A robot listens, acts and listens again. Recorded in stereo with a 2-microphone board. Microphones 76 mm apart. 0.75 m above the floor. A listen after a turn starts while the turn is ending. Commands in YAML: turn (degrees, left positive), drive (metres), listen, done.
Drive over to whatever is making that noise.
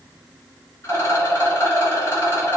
turn: 40
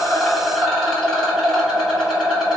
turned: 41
drive: 1.0
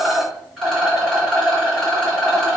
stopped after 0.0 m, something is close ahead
done: "Blocked. The rattle is further on, straight ahead."